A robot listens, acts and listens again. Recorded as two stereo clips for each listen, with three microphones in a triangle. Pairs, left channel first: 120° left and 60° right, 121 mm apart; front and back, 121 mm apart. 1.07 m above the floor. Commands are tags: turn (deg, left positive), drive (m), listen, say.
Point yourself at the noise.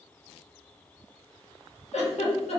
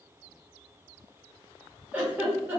<turn deg="105"/>
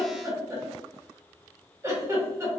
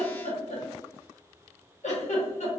<say>Facing the giggle, under 1 m away.</say>